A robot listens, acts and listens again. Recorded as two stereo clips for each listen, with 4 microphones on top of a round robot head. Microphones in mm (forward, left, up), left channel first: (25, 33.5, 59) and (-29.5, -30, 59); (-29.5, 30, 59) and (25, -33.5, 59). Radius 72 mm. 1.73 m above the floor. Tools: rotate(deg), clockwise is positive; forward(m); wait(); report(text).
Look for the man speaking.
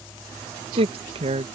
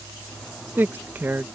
rotate(120)
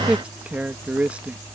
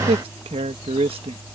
rotate(55)
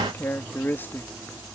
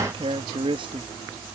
rotate(20)
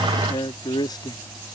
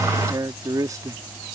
report("Found it: a man speaking, straight ahead.")